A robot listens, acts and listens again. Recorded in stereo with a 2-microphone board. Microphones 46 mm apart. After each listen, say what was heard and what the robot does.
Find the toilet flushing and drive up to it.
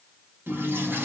The toilet flushing: about 45° right or 135° right. Turn 45° right.
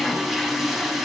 Drive 1.0 m forward.
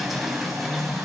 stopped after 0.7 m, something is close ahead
Blocked. The toilet flushing is further on, straight ahead.